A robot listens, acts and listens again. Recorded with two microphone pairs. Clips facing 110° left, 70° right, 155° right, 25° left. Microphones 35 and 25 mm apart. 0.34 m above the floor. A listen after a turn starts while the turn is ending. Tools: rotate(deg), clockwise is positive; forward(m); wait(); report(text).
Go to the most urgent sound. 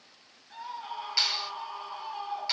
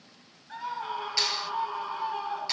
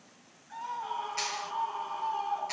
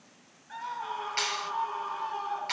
rotate(20)
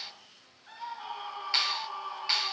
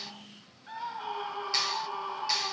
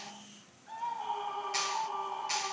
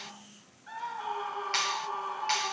forward(1.0)
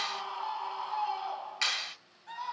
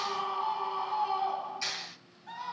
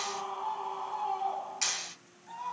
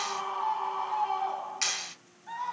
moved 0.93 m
forward(1.0)
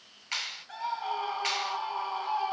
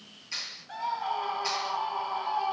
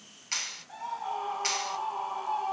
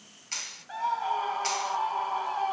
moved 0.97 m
rotate(-15)
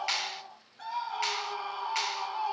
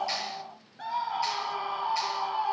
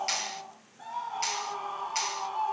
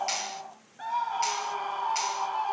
forward(1.0)
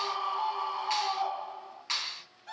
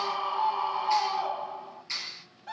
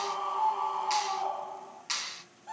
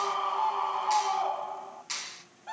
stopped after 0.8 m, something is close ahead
report("Arrived at the scream, straight ahead.")